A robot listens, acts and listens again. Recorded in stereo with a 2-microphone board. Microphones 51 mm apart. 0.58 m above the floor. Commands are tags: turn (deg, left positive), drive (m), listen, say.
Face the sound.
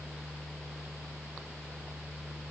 <listen/>
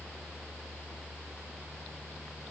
<listen/>
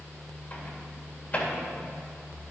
<turn deg="30"/>
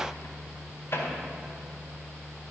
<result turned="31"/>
<turn deg="115"/>
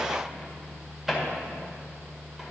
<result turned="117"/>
<say>Facing the microwave, 1 to 2 m away.</say>